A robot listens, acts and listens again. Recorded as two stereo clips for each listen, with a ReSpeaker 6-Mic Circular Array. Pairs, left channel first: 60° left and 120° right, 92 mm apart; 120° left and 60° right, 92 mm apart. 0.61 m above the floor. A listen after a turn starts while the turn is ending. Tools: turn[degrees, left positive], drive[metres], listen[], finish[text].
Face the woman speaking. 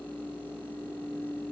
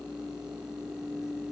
Action: listen[]
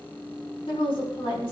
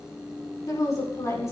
Thought: The woman speaking: 70° left.
Action: turn[70]
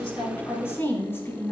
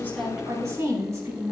Action: finish[Found it: a woman speaking, straight ahead, over 4 m away.]